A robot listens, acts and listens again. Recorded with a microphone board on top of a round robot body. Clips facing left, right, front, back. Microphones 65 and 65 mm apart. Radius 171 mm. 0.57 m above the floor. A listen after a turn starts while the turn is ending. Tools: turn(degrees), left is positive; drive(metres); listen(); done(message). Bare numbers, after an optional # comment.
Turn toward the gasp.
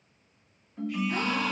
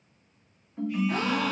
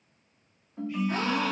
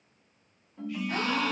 # The gasp: 65° right.
turn(-65)
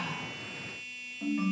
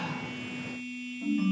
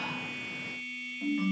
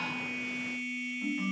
done("Facing where the gasp came from. I can't hear it now.")